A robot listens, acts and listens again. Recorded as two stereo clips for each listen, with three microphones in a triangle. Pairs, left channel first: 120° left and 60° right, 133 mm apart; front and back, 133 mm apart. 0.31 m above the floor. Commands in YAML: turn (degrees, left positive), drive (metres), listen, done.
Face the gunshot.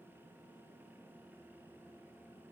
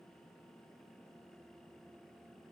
listen: true
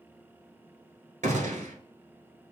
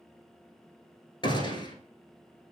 turn: -50
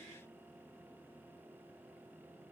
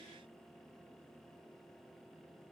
done: "I heard a gunshot from this way, but can't make it out now."